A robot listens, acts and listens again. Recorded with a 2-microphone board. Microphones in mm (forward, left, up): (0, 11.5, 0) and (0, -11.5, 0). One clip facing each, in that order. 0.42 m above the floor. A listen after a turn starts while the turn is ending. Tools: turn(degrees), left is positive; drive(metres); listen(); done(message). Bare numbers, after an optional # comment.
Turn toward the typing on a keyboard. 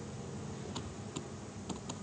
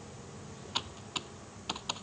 # The typing on a keyboard: about 50° right or 130° right.
turn(-50)
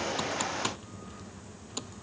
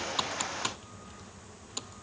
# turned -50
done("Facing the typing on a keyboard.")